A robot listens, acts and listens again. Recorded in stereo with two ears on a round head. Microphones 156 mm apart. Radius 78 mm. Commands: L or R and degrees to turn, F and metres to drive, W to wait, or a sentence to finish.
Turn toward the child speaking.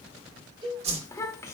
L15
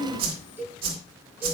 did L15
L30
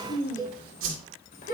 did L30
L135
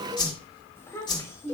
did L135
L15
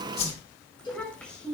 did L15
Found it: a child speaking, straight ahead, 2 to 4 m away.